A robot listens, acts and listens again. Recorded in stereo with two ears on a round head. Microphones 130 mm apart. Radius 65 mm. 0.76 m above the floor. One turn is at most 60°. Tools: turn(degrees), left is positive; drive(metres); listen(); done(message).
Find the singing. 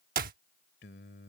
turn(degrees=60)
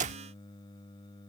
turn(degrees=30)
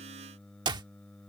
done("Found it: singing, straight ahead.")